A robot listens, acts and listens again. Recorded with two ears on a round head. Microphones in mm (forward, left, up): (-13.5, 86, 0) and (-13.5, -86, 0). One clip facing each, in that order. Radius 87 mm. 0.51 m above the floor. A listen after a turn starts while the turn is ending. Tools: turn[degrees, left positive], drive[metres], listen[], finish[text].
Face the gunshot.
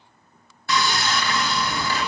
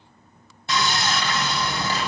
Action: listen[]
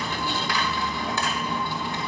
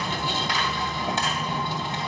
Action: listen[]
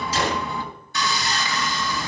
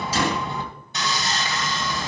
Action: turn[-90]
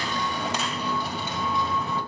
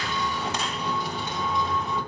Action: finish[I heard a gunshot from this way, but can't make it out now.]